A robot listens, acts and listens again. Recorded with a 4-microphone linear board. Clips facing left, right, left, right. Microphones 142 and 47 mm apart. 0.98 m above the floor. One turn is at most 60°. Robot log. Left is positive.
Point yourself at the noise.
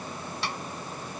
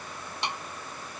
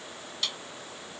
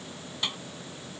note: The snare drum: about 20° right or 160° right.
cmd yaw -20
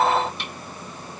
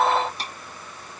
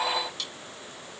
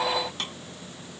note: So it is at 140° right.
cmd yaw -60
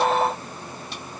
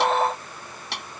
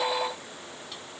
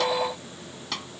note: The snare drum is now 75° right.
cmd yaw -60
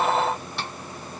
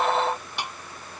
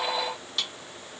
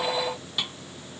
note: The snare drum is now 15° right.
cmd yaw -15
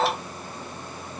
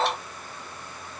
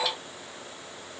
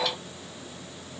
cmd idle
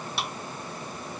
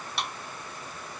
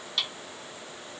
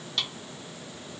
end: Facing the snare drum.